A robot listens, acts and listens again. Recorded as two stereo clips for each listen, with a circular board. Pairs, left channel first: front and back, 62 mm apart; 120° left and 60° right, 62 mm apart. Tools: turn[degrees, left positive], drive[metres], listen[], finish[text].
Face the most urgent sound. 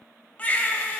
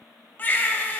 Thought: The baby crying: 65° left.
Action: turn[65]
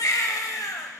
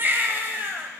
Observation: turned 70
Thought: The baby crying is now 10° right.
Action: turn[-10]
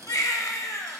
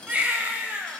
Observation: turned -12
Action: finish[Facing the baby crying.]